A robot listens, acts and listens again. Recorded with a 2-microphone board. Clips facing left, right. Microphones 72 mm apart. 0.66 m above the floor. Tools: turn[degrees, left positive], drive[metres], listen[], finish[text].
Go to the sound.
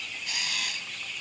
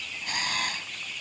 Thought: The camera shutter: about 40° right or 140° right.
Action: turn[-40]
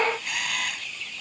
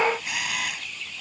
Action: drive[1.0]
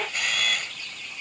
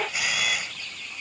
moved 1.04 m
Action: drive[1.0]
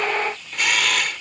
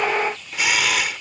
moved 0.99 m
Action: drive[1.0]
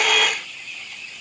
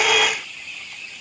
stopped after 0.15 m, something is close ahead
Action: finish[Arrived at the camera shutter, straight ahead.]